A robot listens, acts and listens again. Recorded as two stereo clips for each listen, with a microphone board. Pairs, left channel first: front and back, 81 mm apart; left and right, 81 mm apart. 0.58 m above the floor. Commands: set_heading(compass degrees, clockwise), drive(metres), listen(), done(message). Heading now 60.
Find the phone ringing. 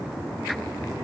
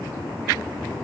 listen()
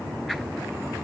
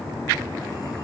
listen()
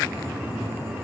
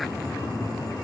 done("I can't make out a phone ringing to turn to.")